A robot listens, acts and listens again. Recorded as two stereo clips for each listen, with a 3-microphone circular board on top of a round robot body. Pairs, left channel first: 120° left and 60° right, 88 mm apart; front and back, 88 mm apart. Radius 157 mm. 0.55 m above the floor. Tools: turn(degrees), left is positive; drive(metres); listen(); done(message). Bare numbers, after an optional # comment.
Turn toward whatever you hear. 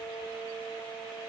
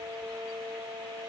listen()
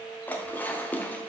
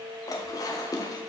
# The dishes clattering: 50° left.
turn(50)
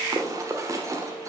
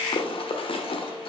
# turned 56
done("Facing the dishes clattering.")